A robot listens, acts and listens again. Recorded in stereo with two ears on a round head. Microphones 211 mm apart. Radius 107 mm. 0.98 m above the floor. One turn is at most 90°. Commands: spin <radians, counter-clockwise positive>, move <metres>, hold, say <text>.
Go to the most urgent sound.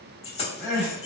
spin 0.52
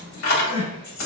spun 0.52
spin 1.57
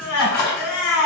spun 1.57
spin 1.22
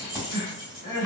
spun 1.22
spin 0.52
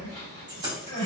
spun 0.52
spin 0.26
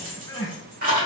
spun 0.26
move 1.0
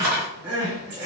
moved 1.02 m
spin -0.17
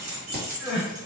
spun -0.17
move 1.0
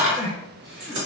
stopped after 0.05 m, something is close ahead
say Arrived at the crying, straight ahead.